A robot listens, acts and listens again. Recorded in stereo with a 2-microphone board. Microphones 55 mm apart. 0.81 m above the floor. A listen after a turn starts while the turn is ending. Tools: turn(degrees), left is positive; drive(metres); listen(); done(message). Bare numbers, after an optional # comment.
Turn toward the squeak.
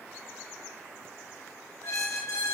turn(90)
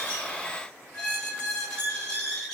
# So it is at 10° left.
turn(10)
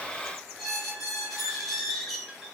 done("Found it: a squeak, straight ahead.")